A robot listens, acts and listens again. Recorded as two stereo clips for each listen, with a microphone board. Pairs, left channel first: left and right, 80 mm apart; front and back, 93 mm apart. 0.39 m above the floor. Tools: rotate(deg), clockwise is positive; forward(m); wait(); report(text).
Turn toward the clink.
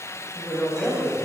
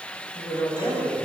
wait()
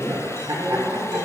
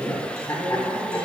wait()
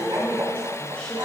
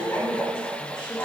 report("I can't make out a clink, only a woman speaking and laughter.")